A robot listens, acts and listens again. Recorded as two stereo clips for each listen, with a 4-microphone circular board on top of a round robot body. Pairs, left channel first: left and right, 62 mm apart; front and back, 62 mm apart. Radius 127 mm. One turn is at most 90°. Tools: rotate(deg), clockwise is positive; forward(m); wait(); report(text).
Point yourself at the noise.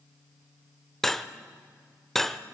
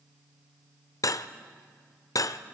report("Found it: cutlery clinking, straight ahead.")